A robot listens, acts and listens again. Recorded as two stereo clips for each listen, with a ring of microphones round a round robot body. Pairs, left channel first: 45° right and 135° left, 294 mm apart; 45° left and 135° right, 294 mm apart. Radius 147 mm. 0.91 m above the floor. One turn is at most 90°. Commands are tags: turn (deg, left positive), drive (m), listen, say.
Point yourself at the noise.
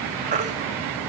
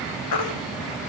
<turn deg="70"/>
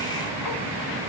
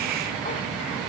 <listen/>
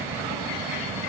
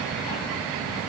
<listen/>
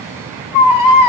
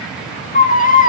<turn deg="-20"/>
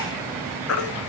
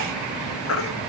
<say>Found it: a baby crying, straight ahead, 1 to 2 m away.</say>